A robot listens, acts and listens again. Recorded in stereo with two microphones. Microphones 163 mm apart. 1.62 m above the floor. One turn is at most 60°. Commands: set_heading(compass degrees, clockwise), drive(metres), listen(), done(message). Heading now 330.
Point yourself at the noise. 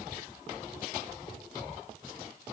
set_heading(300)
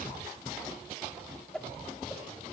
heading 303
done("Facing the whoosh.")